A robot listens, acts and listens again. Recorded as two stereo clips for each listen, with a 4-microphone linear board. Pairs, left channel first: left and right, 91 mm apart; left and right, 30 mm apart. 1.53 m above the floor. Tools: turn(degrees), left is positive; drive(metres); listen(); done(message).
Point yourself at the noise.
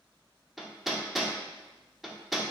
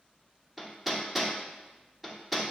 turn(degrees=30)
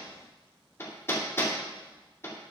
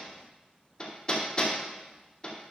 turn(degrees=150)
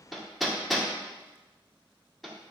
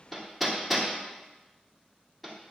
done("Facing the hammering.")